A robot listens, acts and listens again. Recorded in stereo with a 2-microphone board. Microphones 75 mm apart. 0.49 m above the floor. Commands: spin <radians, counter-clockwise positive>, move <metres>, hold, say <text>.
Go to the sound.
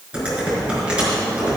spin -0.52
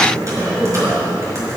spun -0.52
spin -2.36
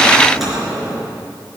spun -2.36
move 1.0
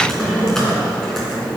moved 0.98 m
move 1.0
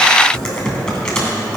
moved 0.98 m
spin 0.17
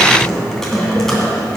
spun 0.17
move 1.0
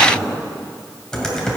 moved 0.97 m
spin 0.17
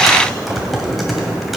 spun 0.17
move 1.0
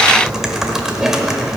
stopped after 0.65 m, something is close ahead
say I am next to the typing on a keyboard.